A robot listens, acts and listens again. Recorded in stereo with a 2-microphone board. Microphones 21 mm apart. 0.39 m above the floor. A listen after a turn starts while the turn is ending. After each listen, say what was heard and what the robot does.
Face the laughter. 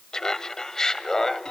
The laughter: about 25° left or 155° left. Turn 25° left.
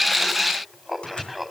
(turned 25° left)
Facing the laughter, 2 to 4 m away.